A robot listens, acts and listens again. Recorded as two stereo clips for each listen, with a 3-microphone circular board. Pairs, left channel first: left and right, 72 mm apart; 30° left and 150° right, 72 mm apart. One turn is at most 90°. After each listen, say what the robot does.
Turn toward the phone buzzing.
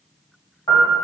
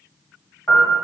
Keep listening.
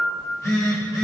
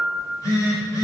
Turn 60° left.
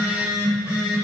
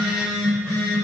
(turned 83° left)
Turn 25° right.
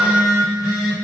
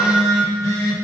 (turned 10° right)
Turn 15° right.
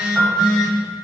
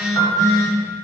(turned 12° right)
Found it: a phone buzzing, straight ahead.